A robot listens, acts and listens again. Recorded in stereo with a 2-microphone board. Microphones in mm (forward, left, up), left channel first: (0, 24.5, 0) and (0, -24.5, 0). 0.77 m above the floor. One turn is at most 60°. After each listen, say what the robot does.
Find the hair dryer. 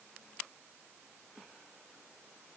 Keep listening.
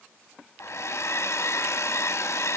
Turn 60° left.
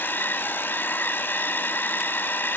Turn 50° left.
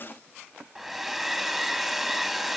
Found it: a hair dryer, straight ahead, under 1 m away.